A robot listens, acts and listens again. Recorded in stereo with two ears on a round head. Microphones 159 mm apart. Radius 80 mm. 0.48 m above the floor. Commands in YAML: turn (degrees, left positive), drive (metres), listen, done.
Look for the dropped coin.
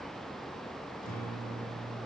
listen: true
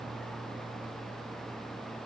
listen: true
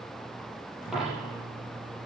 turn: 30
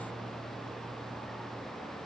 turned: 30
listen: true
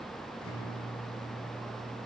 done: "I heard a dropped coin, but can't make it out now. It was about 30° right or 150° left."